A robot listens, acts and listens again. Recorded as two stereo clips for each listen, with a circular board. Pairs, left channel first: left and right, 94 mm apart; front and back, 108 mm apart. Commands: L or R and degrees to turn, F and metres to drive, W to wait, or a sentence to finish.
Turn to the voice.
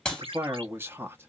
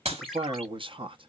R155
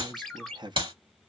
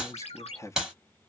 R60
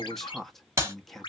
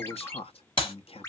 Found it: a man speaking, straight ahead.